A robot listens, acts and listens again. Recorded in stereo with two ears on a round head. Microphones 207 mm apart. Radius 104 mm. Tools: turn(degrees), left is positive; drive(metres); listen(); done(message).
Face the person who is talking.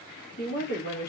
turn(degrees=45)
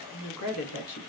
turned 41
turn(degrees=95)
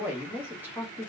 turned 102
done("Found it: a woman speaking, straight ahead.")